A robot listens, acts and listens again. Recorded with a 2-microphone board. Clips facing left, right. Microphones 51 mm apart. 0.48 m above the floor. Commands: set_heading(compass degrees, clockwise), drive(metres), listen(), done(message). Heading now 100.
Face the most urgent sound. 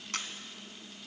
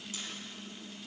listen()
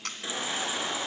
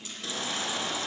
set_heading(80)
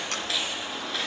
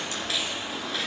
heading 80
done("Found it: a baby crying, straight ahead.")